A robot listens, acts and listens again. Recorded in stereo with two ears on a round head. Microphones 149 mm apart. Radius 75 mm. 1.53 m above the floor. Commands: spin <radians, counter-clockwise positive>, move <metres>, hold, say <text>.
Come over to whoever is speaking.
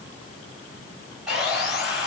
hold
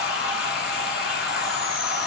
hold
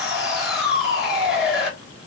say I can't make out anyone speaking, only sawing.